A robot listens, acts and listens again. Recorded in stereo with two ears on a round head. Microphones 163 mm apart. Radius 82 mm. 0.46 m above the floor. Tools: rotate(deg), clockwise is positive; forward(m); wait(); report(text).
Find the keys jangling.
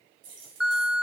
rotate(65)
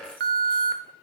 wait()
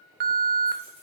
wait()
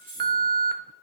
rotate(15)
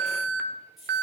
report("Found it: keys jangling, straight ahead, over 4 m away.")